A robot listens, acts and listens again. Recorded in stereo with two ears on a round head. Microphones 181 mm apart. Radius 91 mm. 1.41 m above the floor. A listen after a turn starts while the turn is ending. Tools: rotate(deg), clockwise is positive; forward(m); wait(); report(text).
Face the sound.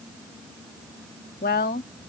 rotate(-45)
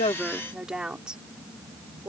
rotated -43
report("Facing the woman speaking.")